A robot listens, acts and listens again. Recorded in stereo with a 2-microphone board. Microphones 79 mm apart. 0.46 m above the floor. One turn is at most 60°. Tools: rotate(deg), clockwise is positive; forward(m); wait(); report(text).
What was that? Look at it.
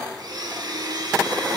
rotate(55)
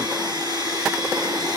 rotate(60)
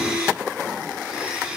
rotate(15)
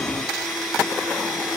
report("Facing the blender.")